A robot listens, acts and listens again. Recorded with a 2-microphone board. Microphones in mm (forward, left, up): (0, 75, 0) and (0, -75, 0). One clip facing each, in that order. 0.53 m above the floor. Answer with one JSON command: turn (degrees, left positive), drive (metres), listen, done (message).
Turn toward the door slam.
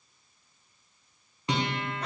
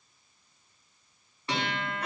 {"listen": true}
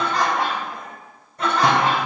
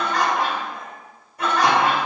{"listen": true}
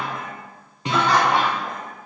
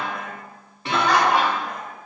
{"done": "I can't make out a door slam to turn to."}